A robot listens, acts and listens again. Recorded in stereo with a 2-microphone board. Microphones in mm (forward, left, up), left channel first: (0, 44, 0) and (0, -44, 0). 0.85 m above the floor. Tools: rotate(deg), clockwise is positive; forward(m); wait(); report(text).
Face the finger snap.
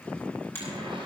rotate(-25)
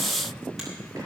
wait()
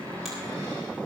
wait()
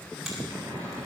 report("I heard a finger snap, but can't make it out now. It was about straight ahead or 130° left.")